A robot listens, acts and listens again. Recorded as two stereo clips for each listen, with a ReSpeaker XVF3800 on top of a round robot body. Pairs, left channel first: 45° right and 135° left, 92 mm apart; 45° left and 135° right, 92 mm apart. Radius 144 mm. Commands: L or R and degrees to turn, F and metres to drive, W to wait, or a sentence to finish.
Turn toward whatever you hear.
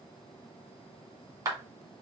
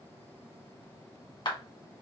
L85
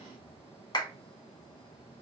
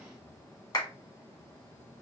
Facing the clap.